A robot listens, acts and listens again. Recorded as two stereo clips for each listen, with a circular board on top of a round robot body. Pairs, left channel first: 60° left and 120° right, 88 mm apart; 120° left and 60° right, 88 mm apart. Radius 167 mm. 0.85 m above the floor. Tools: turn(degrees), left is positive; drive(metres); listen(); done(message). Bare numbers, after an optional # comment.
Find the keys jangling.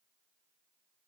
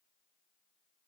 listen()
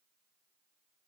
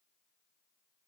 listen()
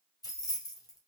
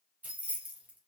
# The keys jangling: 15° left.
turn(15)
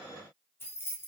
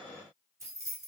done("Found it: keys jangling, straight ahead.")